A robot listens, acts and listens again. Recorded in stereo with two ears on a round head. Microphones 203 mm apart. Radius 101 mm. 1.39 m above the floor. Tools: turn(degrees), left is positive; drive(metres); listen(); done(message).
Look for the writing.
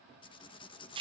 turn(degrees=20)
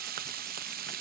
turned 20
listen()
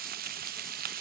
listen()
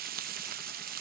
done("I heard writing, but can't make it out now. It was about straight ahead or 140° left.")